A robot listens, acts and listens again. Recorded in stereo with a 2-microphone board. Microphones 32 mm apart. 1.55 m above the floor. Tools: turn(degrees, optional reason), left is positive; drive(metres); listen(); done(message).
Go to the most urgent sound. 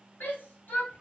turn(degrees=90)
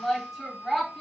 drive(metres=1.0)
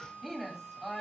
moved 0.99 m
drive(metres=1.0)
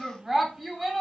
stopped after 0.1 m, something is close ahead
turn(degrees=-10, reason="The shout is now 10° right.")
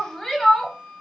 done("Arrived at the shout, straight ahead.")